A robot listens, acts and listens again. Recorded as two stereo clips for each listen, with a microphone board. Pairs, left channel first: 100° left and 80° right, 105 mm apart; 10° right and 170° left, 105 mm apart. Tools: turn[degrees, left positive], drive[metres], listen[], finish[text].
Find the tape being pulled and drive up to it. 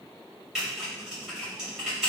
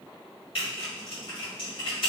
Action: listen[]
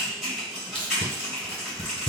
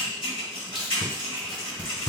Thought: The tape being pulled: 85° left.
Action: turn[85]
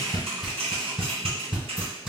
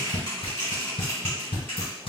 Action: drive[1.0]
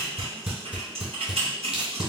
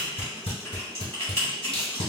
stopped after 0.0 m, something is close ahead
Action: finish[Something is in my way. I am facing the tape being pulled but have not reached it.]